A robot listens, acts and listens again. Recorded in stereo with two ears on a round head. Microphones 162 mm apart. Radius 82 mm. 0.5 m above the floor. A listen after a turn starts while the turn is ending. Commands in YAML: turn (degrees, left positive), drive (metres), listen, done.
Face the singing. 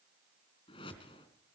listen: true
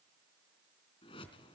listen: true
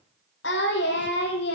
turn: 60
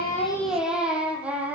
turn: -10
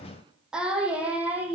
turn: -10
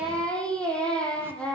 done: "Facing the singing."